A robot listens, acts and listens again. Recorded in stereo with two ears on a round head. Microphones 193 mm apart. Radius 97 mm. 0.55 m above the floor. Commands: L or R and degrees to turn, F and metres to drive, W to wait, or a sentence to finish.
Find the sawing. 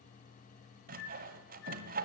R40
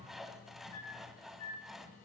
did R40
Facing the sawing, 1 to 2 m away.